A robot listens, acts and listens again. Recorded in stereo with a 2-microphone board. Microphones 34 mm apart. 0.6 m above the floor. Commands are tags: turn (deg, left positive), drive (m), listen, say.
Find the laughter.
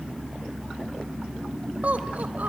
<turn deg="-60"/>
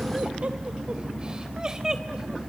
<turn deg="-20"/>
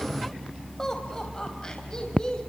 <turn deg="25"/>
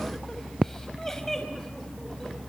<turn deg="15"/>
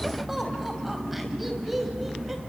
<say>Found it: laughter, straight ahead, 2 to 4 m away.</say>